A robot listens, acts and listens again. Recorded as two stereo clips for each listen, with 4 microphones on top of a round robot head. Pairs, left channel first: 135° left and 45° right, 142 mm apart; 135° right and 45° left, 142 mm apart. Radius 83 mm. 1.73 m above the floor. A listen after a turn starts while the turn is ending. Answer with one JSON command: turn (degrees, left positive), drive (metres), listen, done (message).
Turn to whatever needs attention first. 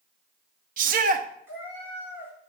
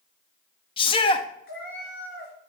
{"turn": -80}
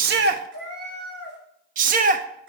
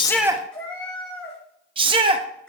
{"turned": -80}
{"turn": -10}
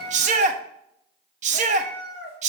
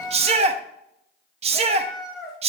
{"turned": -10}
{"done": "Facing the shout."}